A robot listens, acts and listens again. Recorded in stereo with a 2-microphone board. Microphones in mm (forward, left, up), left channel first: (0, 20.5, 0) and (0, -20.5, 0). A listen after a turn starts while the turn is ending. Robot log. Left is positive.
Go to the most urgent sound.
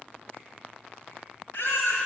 note: The baby crying: about 60° left or 120° left.
cmd yaw +60
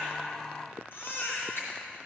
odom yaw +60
note: So it is at 60° left.
cmd yaw +60
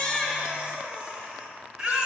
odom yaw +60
note: The baby crying is now 20° right.
cmd yaw -20
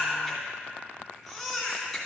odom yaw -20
cmd fwd 1.0
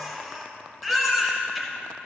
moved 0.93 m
cmd fwd 1.0
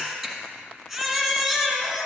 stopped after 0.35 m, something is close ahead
note: The baby crying is now 10° right.
cmd yaw -10
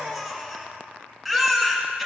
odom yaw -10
end: Arrived at the baby crying, straight ahead.